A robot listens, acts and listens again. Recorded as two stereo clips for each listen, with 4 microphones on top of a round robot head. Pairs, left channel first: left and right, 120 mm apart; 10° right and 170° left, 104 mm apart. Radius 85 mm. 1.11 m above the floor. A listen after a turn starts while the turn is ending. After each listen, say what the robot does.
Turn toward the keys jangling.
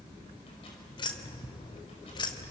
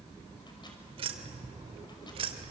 Turn 140° left.
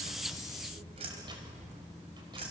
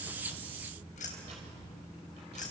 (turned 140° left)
Turn 35° right.
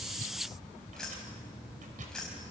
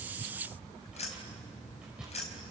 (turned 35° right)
Found it: keys jangling, straight ahead.